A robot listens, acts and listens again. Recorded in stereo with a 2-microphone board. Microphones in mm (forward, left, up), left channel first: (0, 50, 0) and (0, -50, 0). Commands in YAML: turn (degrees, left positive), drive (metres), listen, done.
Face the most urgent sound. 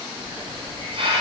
listen: true
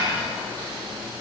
listen: true
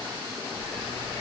done: "I can't make out anything urgent to turn to."